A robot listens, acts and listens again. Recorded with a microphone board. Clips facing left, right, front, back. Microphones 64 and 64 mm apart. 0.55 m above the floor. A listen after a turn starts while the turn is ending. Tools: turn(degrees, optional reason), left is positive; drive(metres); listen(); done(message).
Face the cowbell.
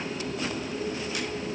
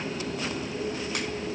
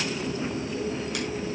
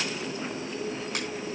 listen()
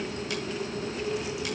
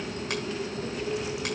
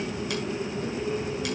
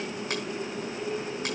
listen()
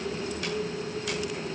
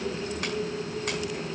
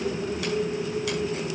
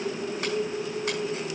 done("I can't make out a cowbell to turn to.")